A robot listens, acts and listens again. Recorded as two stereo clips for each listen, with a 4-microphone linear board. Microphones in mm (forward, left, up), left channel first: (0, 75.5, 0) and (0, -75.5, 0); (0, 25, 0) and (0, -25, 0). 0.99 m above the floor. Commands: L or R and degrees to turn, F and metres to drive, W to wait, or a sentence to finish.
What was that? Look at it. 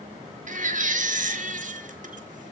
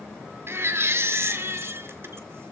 R65
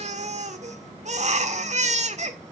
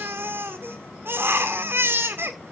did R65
R55
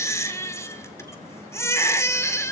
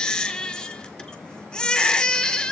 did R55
L20
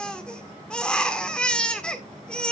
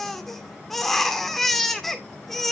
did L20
Facing the baby crying.